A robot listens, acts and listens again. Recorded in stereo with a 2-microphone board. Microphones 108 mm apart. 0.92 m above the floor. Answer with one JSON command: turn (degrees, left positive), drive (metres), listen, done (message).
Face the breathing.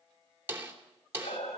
{"turn": 90}
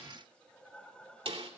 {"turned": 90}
{"turn": 10}
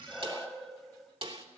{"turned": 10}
{"done": "Facing the breathing, 2 to 4 m away."}